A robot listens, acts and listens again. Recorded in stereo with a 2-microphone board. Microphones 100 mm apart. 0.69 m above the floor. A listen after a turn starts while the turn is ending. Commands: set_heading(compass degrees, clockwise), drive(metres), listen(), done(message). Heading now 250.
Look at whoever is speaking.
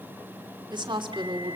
set_heading(310)
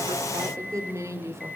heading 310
set_heading(345)
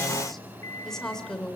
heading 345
set_heading(335)
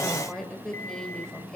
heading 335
done("Facing the woman speaking, over 4 m away.")